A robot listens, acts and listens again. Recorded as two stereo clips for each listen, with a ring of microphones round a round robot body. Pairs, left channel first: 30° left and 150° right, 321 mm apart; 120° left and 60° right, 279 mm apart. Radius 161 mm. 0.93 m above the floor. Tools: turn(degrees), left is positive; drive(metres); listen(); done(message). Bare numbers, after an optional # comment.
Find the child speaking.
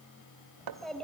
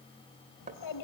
# The child speaking: 115° left.
turn(115)
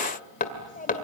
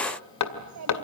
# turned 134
# The child speaking is now 35° right.
turn(-35)
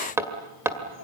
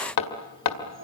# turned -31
# The child speaking is now 15° right.
turn(-15)
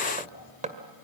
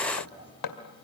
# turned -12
listen()
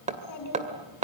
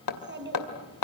# The child speaking is now 10° right.
turn(-10)
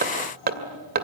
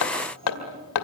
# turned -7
done("Found it: a child speaking, straight ahead.")